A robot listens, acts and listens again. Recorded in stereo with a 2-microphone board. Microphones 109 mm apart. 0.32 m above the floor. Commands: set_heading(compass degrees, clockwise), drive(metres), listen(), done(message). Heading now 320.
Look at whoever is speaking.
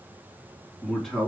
set_heading(290)
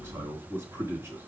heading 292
set_heading(317)
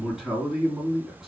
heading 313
done("Facing the man speaking, 2 to 4 m away.")